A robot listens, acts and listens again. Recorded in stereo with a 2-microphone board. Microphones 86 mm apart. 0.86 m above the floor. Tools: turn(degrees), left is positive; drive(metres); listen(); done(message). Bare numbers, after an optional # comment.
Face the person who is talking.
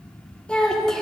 turn(30)
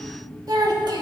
# So it is at 55° right.
turn(-55)
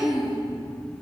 # The child speaking is now 10° right.
turn(-10)
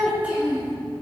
# The child speaking is now 20° right.
turn(-20)
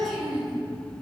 done("Found it: a child speaking, straight ahead.")